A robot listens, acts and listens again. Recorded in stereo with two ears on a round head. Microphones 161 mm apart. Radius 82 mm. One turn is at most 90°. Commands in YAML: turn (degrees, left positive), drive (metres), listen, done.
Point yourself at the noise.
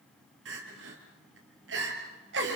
turn: -70
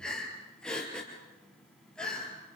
done: "Facing the crying."